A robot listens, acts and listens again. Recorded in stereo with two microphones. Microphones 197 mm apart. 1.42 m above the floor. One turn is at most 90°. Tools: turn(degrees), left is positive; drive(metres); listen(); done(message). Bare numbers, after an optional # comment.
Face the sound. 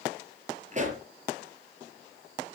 # The pop: about 40° right or 140° right.
turn(-40)
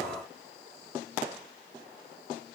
listen()
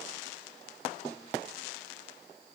done("I heard a pop, but can't make it out now. It was about straight ahead or 100° right.")